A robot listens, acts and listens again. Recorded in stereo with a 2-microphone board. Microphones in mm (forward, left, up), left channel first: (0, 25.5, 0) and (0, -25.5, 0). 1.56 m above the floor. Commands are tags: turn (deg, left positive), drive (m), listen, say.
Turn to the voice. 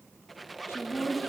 <turn deg="65"/>
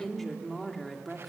<say>Facing the woman speaking.</say>